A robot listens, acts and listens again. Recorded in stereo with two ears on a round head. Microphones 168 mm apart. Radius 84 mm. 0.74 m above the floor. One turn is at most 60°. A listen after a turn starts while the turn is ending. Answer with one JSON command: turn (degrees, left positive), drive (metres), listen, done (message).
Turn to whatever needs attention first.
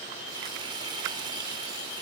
{"listen": true}
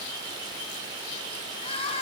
{"turn": 30}
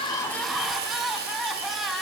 {"done": "Found it: crying, straight ahead."}